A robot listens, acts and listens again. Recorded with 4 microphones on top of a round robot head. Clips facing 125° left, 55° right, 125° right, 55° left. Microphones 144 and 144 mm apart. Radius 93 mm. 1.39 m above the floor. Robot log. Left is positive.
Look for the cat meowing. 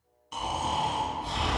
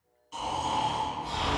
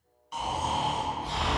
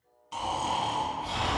cmd idle
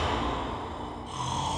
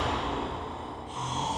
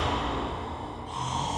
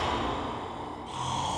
cmd idle
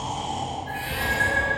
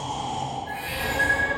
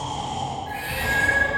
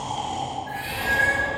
note: The cat meowing: 160° right.
cmd yaw -160
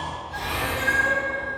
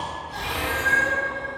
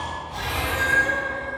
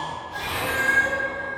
note: The cat meowing is now 25° left.
cmd yaw +25
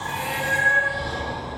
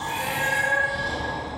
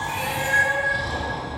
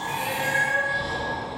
end: Found it: a cat meowing, straight ahead.